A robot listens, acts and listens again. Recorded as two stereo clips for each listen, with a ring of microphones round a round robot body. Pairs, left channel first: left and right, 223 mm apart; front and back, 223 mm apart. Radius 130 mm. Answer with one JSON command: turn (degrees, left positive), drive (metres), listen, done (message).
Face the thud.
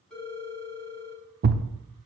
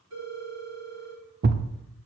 {"turn": -135}
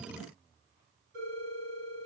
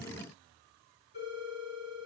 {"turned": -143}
{"turn": 10}
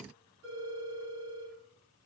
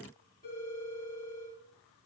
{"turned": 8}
{"done": "Facing where the thud came from. I can't hear it now."}